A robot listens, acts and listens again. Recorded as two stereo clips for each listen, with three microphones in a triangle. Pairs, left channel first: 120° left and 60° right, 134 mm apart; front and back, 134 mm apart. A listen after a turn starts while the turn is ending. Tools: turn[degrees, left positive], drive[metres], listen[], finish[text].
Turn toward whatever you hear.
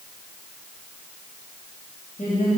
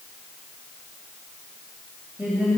Thought: The woman speaking: 100° left.
Action: turn[100]
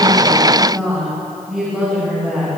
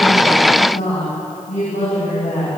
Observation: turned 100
Thought: The woman speaking is now 25° left.
Action: turn[25]
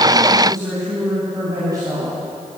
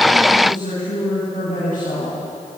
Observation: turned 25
Action: finish[Facing the woman speaking, over 4 m away.]